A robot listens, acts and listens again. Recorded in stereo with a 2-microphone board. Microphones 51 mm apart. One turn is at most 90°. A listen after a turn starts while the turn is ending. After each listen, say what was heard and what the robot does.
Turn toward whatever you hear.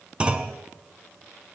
The clunk: about 20° right or 160° right. Turn 20° right.
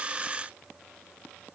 Keep listening.
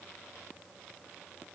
I heard a clunk, but can't make it out now. It was about straight ahead or 140° right.